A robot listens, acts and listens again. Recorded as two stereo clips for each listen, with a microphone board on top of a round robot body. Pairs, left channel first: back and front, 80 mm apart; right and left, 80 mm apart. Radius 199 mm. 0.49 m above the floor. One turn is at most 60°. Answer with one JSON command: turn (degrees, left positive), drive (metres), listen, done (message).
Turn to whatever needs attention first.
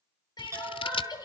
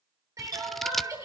{"turn": 60}
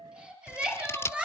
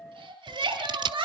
{"turn": 60}
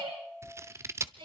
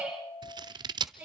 {"turn": 15}
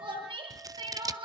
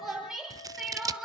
{"done": "Found it: crying, straight ahead."}